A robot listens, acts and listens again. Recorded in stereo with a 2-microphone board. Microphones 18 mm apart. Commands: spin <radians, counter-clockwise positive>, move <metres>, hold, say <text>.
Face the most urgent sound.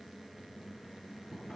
hold
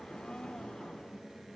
hold
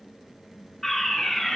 spin 0.52
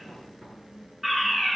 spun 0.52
spin -0.26
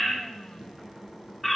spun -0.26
say Found it: a fire alarm, straight ahead, 2 to 4 m away.